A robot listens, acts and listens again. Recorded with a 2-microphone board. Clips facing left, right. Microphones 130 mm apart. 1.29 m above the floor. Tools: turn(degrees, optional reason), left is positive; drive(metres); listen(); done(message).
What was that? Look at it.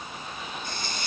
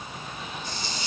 turn(degrees=55, reason="The hiss: about 55° left or 125° left.")
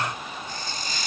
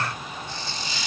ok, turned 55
turn(degrees=55, reason="So it is at 55° left.")
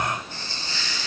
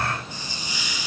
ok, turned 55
turn(degrees=-15, reason="The hiss is now 15° right.")
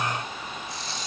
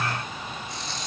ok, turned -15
done("Facing the hiss.")